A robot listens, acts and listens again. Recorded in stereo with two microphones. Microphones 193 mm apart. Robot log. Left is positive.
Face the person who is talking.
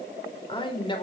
note: The man speaking: about 25° left or 155° left.
cmd yaw +25
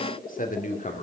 note: The man speaking: about 40° left or 140° left.
cmd yaw +40
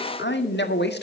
note: So it is at 120° left.
cmd yaw +120
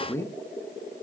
note: The man speaking is now 15° left.
cmd yaw +15
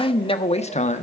note: The man speaking is now 35° left.
cmd yaw +35
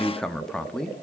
end: Facing the man speaking.